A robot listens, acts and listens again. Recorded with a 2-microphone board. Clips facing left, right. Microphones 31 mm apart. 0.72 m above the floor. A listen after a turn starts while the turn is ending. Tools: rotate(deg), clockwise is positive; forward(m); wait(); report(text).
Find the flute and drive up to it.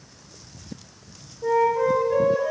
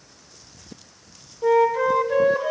rotate(40)
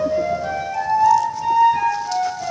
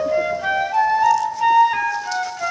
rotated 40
rotate(100)
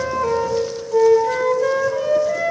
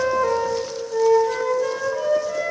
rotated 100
rotate(-10)
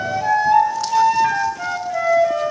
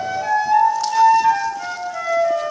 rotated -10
forward(1.0)
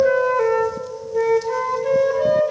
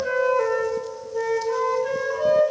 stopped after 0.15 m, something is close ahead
report("Something is in my way. I am facing the flute but have not reached it.")